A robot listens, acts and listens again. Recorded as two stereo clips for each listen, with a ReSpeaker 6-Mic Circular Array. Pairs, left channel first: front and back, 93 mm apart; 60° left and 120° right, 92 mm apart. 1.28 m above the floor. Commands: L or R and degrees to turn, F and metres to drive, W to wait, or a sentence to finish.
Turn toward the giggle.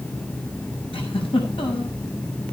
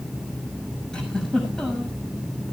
R25
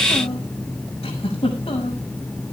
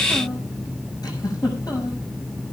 L10
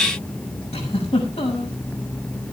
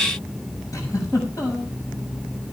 Found it: a giggle, straight ahead, over 4 m away.